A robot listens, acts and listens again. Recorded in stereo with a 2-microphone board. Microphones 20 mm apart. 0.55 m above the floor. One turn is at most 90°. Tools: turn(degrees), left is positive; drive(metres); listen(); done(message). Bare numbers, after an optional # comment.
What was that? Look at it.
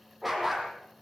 turn(-30)
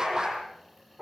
# So it is at 145° right.
turn(-90)
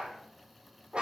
# The dog barking is now 60° right.
turn(-60)
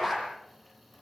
done("Found it: a dog barking, straight ahead, over 4 m away.")